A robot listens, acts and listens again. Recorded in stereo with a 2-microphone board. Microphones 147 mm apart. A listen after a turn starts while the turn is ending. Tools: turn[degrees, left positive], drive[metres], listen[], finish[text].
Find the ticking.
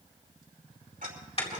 Thought: The ticking: about 70° right or 110° right.
Action: turn[-70]
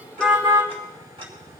Thought: So it is at 40° right.
Action: turn[-40]
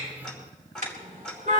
Action: finish[Found it: ticking, straight ahead.]